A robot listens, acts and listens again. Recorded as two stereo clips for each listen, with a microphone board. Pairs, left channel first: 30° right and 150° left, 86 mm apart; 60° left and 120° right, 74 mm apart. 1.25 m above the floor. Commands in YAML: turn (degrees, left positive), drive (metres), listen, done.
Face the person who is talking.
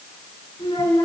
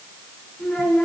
turn: -15
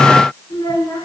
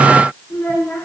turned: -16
done: "Facing the child speaking."